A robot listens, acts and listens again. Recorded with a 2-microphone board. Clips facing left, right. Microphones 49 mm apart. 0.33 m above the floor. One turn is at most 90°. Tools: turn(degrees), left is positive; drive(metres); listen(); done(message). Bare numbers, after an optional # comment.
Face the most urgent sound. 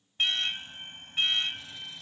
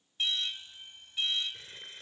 # The alarm: about 50° left or 130° left.
turn(50)
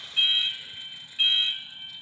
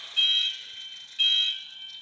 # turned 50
# So it is at 15° left.
turn(15)
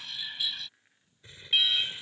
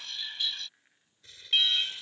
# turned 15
done("Found it: an alarm, straight ahead.")